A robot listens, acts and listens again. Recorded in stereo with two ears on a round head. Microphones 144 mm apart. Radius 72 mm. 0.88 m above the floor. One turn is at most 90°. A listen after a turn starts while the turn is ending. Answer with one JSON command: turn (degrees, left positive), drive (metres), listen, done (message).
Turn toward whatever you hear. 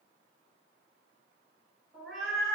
{"turn": 30}
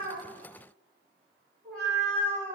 {"turn": 30}
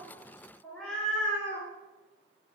{"turn": 30}
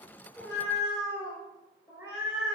{"turn": -30}
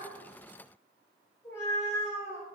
{"turn": 20}
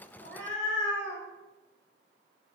{"done": "Facing the cat meowing, 1 to 2 m away."}